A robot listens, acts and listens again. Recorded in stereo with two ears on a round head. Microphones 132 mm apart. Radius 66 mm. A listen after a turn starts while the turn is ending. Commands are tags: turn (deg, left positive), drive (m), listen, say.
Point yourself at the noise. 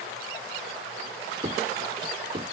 <turn deg="-45"/>
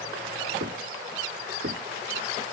<turn deg="-90"/>
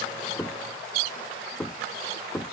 <say>Found it: knocking, straight ahead.</say>